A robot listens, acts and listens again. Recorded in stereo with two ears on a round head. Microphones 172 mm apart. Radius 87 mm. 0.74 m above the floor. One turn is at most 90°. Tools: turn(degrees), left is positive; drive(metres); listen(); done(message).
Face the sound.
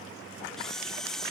turn(degrees=30)
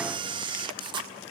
turn(degrees=-30)
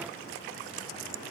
listen()
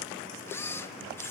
turn(degrees=15)
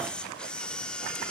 done("Facing the camera shutter.")